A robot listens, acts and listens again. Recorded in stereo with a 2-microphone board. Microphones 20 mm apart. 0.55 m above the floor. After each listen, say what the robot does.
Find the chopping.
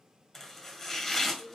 Turn 15° left.
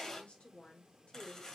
Turn 150° left.
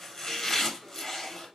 Turn 20° left.
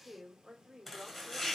Turn 10° left.
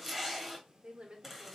Facing the chopping, 1 to 2 m away.